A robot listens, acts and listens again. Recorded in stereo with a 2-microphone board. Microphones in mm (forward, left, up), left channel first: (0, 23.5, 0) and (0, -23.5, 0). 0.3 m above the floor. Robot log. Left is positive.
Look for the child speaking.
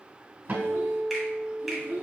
note: The child speaking: about 35° right or 145° right.
cmd yaw -35
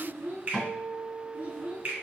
note: The child speaking: about 35° right or 145° right.
cmd yaw -35
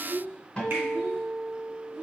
note: The child speaking: about 40° right or 140° right.
cmd yaw -40
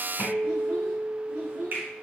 note: So it is at 105° right.
cmd yaw -105
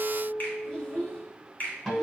note: The child speaking is now 15° left.
cmd yaw +15
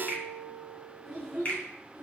end: Facing the child speaking, 2 to 4 m away.